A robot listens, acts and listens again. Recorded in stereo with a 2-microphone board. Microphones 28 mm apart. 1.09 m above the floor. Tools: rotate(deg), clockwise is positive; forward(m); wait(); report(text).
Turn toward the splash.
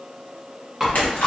rotate(-65)
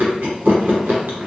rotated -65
wait()
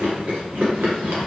report("I heard a splash, but can't make it out now. It was about straight ahead or 50° left.")